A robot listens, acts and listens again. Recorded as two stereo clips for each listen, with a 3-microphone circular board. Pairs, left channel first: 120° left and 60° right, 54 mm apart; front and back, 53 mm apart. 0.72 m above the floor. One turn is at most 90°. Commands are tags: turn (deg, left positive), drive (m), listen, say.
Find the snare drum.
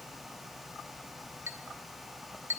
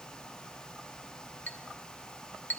<listen/>
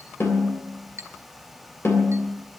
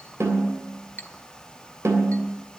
<turn deg="90"/>
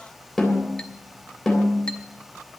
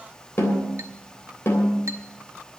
<turn deg="35"/>
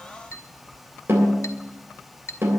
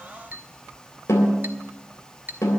<turn deg="-20"/>
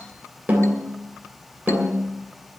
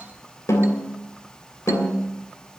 <say>Facing the snare drum, 2 to 4 m away.</say>